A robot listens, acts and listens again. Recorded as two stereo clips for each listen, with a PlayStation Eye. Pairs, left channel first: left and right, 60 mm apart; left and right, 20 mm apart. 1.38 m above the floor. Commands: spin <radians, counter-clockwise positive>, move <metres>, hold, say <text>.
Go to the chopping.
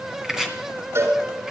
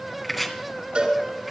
spin -0.52
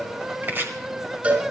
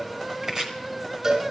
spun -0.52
spin -2.44
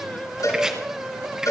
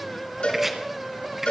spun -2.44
spin -0.17
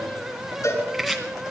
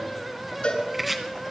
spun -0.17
move 1.0
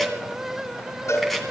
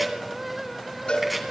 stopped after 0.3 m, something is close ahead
hold
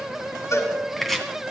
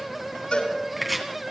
say Blocked. The chopping is further on, straight ahead.